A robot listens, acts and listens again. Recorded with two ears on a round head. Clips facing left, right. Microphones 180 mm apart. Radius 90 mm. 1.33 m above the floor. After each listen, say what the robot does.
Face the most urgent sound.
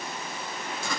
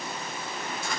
Keep listening.
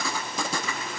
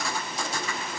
Keep listening.
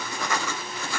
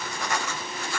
I can't make out anything urgent, only writing.